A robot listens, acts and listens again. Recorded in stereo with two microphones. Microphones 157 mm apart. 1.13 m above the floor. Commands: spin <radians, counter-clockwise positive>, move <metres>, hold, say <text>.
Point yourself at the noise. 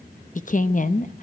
spin 0.96
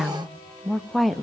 say Found it: a woman speaking, straight ahead, 1 to 2 m away.